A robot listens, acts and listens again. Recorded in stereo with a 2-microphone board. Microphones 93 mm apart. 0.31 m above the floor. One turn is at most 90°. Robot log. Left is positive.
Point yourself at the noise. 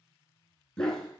cmd yaw +30
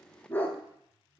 note: The dog barking: about 15° left or 165° left.
cmd yaw +15
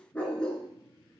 cmd yaw +30
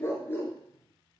note: So it is at 160° left.
cmd yaw +90
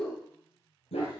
note: The dog barking is now 85° left.
cmd yaw +85
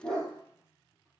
end: Facing the dog barking.